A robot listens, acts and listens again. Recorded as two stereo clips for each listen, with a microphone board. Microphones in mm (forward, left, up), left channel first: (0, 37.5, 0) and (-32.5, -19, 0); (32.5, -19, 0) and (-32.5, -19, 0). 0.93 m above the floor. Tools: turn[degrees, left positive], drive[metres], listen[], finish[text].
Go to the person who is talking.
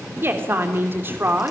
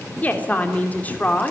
Thought: The woman speaking: 65° right.
Action: turn[-65]
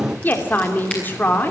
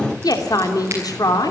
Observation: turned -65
Action: drive[1.0]
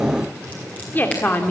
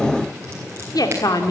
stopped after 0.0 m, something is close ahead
Action: finish[Blocked. The woman speaking is further on, straight ahead.]